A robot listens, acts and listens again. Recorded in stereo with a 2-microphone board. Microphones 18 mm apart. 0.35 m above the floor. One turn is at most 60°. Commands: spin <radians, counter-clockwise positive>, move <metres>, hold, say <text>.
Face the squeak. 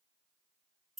hold
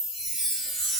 hold
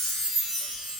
say I can't make out a squeak, only a chime.